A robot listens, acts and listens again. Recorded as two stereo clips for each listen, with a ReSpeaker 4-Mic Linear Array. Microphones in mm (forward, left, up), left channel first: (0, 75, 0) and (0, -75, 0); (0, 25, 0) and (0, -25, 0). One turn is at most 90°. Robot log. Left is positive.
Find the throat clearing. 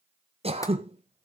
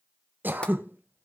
note: The throat clearing: about 40° right or 140° right.
cmd yaw -40
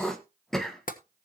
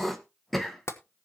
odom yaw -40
end: Found it: throat clearing, straight ahead, 1 to 2 m away.